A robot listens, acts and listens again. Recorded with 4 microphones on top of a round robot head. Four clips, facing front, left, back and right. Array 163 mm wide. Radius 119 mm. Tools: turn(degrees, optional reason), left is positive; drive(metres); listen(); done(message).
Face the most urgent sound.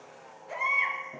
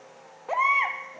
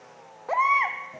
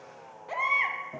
turn(degrees=145, reason="The baby crying: 145° left.")
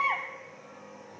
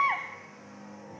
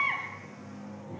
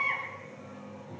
turn(degrees=55, reason="The baby crying is now 55° left.")
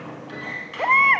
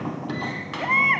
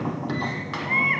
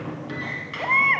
turn(degrees=10, reason="The baby crying is now 10° left.")
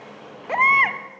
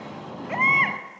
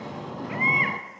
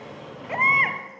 done("Facing the baby crying.")